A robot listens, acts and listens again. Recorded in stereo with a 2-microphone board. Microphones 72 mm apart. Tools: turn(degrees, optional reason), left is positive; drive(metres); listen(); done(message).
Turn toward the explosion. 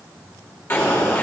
turn(degrees=40, reason="The explosion: about 40° left or 140° left.")
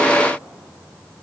listen()
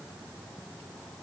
done("I heard an explosion, but can't make it out now. It was about straight ahead or 100° left.")